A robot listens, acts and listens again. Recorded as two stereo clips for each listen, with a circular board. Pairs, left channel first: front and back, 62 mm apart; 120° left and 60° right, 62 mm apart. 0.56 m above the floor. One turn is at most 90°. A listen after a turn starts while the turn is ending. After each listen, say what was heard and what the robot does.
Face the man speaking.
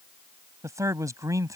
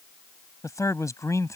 The man speaking: 155° left. Turn 90° left.
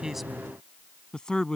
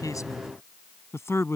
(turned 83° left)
The man speaking is now 80° left. Turn 80° left.
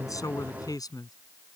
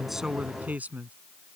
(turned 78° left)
Facing the man speaking.